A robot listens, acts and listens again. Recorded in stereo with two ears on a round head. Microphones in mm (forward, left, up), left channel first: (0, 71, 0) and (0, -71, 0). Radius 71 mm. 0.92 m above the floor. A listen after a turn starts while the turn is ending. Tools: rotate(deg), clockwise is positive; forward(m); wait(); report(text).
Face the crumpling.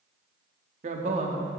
wait()
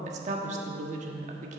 wait()
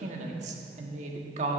report("I can't make out crumpling to turn to.")